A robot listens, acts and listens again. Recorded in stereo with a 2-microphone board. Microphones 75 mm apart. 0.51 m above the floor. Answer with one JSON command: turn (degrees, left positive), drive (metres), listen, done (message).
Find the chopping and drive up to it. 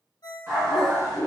{"listen": true}
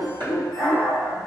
{"turn": -55}
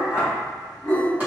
{"listen": true}
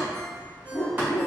{"listen": true}
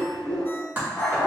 {"turn": -25}
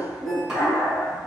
{"drive": 1.0}
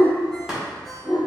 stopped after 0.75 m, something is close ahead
{"listen": true}
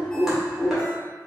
{"listen": true}
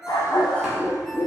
{"done": "I heard chopping from this way, but can't make it out now. I did not reach it."}